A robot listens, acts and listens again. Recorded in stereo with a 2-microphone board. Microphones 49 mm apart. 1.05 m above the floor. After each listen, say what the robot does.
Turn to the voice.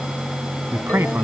Turn 55° right.
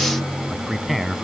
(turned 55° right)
Found it: a man speaking, straight ahead.